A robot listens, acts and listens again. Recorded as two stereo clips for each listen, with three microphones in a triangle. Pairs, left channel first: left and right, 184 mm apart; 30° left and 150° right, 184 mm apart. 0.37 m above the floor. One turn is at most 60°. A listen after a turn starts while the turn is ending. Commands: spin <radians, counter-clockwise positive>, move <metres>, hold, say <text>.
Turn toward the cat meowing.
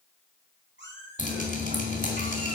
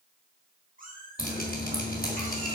spin -1.05
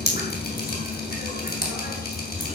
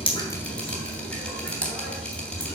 spin -0.79
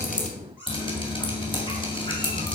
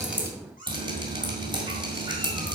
spin -0.17
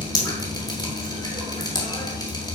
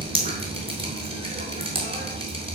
hold
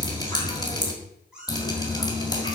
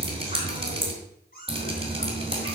say Facing the cat meowing.